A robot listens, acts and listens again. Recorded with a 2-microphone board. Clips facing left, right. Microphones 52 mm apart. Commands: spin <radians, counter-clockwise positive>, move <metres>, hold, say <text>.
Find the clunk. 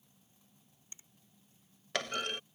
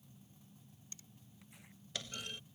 spin 1.22
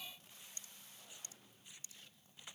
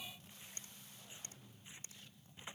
hold
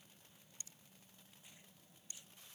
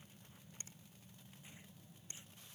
say I heard a clunk, but can't make it out now. It was about straight ahead or 40° left.